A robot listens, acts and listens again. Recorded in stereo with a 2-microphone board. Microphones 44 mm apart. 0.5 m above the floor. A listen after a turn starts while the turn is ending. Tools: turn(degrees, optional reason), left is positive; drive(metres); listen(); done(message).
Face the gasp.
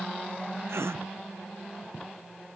turn(degrees=-90)
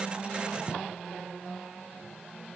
done("Facing where the gasp came from. I can't hear it now.")